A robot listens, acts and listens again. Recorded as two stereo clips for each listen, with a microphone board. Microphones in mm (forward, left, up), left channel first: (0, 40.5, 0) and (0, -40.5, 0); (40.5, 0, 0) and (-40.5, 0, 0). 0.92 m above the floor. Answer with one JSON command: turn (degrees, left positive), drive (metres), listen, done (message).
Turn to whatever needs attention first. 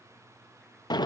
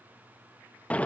{"listen": true}
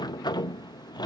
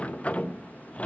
{"listen": true}
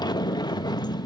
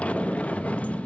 {"done": "I can't make out anything urgent to turn to."}